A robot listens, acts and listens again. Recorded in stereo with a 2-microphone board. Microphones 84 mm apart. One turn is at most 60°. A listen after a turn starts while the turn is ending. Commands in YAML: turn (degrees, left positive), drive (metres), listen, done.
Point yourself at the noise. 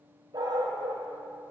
turn: -60
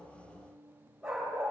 turn: -10
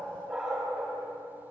done: "Found it: a dog barking, straight ahead."